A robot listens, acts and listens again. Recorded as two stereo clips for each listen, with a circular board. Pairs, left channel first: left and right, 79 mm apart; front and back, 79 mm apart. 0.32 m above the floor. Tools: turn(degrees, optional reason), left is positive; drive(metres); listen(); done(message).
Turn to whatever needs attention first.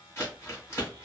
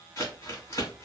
listen()
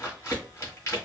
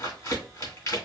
listen()
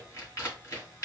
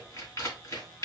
done("I can't make out anything urgent, only crumpling.")